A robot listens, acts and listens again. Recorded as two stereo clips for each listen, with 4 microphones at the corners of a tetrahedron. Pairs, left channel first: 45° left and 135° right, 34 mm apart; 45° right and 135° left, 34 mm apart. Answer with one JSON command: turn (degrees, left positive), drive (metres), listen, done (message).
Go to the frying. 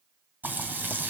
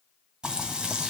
{"turn": -160}
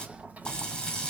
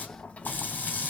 {"turn": -20}
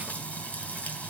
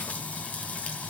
{"drive": 1.0}
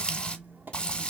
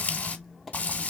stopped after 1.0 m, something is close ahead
{"done": "I am next to the frying."}